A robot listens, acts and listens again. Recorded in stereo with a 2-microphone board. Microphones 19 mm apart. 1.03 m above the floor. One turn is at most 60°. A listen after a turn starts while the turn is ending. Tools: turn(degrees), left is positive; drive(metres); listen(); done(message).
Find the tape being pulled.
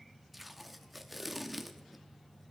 turn(degrees=-30)
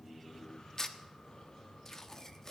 turn(degrees=20)
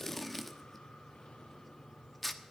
done("Found it: tape being pulled, straight ahead.")